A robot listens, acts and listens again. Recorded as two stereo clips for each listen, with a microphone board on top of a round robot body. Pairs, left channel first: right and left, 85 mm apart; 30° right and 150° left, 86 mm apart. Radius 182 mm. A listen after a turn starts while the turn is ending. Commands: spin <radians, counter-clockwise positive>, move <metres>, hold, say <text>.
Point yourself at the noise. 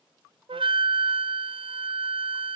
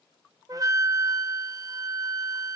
spin 1.83
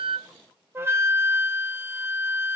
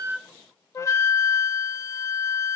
spin 0.44
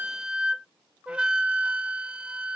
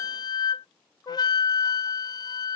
spin 0.17
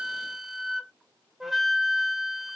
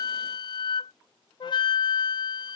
say Found it: a flute, straight ahead.